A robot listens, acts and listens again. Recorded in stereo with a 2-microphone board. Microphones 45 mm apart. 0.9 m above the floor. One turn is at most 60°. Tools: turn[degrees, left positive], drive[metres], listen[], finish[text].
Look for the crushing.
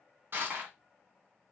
Thought: The crushing: about 50° right or 130° right.
Action: turn[-50]
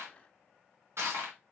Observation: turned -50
Thought: So it is at 75° right.
Action: turn[-60]
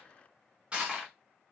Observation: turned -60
Thought: The crushing is now 25° right.
Action: turn[-25]
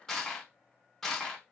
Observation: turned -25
Action: finish[Facing the crushing.]